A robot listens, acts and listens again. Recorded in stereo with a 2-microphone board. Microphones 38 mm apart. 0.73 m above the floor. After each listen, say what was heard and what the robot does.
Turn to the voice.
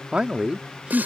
The man speaking: about 25° right or 155° right. Turn 25° right.
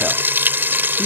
Keep listening.
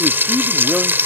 Keep listening.
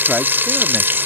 I heard a man speaking, but can't make it out now. It was about straight ahead or 130° right.